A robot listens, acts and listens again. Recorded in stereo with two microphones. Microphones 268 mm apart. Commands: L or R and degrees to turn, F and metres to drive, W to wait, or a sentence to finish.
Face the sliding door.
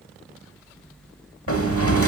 L55
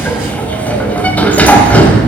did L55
Found it: a sliding door, straight ahead.